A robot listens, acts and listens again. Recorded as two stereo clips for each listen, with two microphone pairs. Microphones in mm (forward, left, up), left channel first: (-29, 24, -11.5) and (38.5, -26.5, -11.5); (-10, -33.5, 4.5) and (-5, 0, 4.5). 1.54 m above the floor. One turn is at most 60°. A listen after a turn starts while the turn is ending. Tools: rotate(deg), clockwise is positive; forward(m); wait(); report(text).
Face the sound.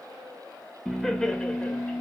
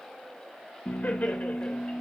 rotate(60)
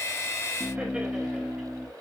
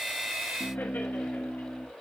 rotate(60)
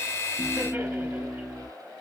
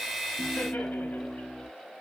rotate(60)
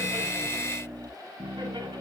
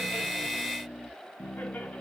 rotate(60)
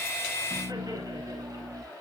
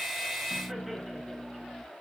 report("Facing the laughter.")